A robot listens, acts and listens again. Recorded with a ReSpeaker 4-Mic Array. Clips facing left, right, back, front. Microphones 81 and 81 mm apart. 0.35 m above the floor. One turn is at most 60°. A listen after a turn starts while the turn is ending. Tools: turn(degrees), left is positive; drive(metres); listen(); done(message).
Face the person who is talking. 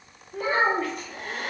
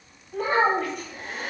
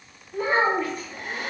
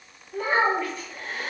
turn(degrees=-60)
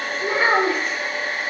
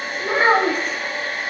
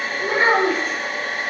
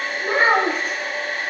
turn(degrees=-45)
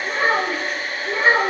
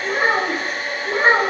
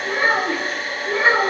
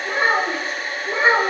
turn(degrees=-60)
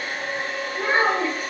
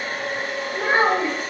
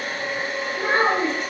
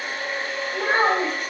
turn(degrees=-50)
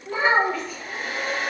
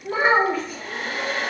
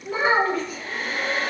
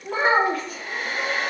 turn(degrees=-25)
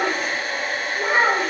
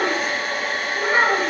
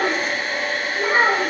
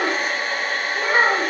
done("Found it: a child speaking, straight ahead.")